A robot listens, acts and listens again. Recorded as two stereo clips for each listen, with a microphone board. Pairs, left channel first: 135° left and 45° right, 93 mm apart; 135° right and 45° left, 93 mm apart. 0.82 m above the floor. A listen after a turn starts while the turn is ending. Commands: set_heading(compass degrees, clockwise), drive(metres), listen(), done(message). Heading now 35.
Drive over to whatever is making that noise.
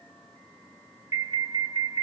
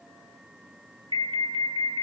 set_heading(20)
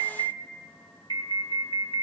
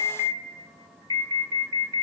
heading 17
drive(1.0)
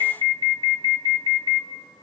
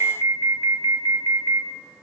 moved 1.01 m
set_heading(32)
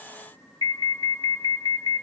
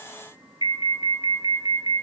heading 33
drive(1.0)
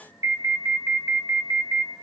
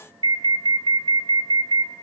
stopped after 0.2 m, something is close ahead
done("Arrived at the alarm, straight ahead.")